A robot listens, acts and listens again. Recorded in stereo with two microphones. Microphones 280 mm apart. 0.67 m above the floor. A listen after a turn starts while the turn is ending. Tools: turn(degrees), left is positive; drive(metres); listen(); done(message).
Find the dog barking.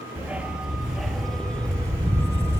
turn(degrees=30)
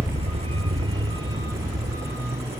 turn(degrees=-10)
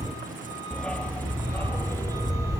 turn(degrees=10)
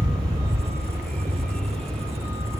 done("Found it: a dog barking, straight ahead.")